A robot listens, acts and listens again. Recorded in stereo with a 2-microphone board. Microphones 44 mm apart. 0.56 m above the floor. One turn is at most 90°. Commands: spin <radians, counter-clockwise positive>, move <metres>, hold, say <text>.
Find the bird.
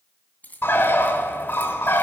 spin 1.13
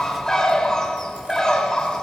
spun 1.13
spin 0.26
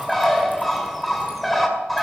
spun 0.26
say Found it: a bird, straight ahead.